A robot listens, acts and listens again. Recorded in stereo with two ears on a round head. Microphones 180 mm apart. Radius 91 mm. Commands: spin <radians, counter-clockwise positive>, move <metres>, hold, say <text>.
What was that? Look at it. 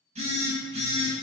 spin -0.52
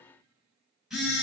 say Facing the phone buzzing, 1 to 2 m away.